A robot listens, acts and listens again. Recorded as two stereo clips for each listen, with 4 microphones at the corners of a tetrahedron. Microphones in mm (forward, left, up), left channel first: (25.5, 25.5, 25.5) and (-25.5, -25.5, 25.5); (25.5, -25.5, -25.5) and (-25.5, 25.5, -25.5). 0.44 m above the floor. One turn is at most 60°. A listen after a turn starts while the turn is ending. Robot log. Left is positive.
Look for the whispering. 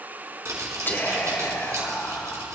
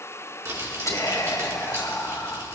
note: The whispering: 10° right.
cmd yaw -10
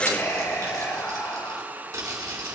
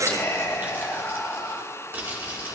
end: Found it: whispering, straight ahead.